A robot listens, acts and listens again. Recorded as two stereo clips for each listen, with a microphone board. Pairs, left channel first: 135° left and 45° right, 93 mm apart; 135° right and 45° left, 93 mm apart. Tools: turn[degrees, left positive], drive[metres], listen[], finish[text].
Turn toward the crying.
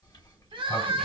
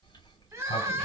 Thought: The crying: 15° right.
Action: turn[-15]
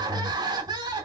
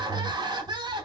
Action: finish[Facing the crying, under 1 m away.]